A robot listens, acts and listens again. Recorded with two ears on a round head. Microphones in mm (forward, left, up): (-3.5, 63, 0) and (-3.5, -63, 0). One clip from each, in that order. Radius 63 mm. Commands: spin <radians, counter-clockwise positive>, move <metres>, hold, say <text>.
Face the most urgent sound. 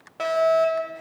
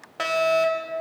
spin -0.52
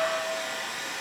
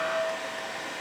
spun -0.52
hold
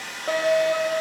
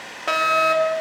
spin -1.92
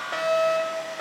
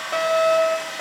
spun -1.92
say Facing the fire alarm.